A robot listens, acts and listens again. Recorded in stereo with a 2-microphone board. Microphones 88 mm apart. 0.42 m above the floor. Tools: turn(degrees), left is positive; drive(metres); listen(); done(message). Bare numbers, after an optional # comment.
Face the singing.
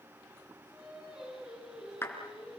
turn(-30)
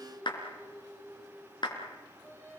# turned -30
# So it is at 25° left.
turn(25)
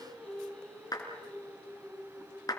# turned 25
# The singing is now 15° left.
turn(15)
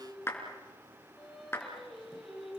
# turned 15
done("Facing the singing.")